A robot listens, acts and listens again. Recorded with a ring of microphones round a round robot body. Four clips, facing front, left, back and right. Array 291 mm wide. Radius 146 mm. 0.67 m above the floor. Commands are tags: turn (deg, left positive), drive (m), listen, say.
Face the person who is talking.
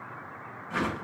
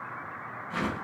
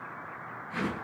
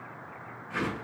<listen/>
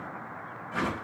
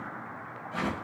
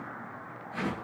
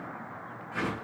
<listen/>
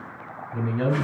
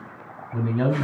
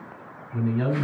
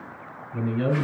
<turn deg="85"/>
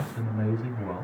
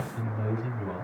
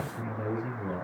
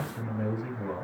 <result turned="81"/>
<say>Found it: a man speaking, straight ahead.</say>